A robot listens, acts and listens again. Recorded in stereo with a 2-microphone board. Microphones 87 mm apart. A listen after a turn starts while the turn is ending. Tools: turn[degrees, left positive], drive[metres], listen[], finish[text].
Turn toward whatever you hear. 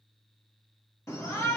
Thought: The shout: about 35° left or 145° left.
Action: turn[35]
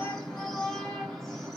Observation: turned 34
Action: finish[Found it: a shout, straight ahead, under 1 m away.]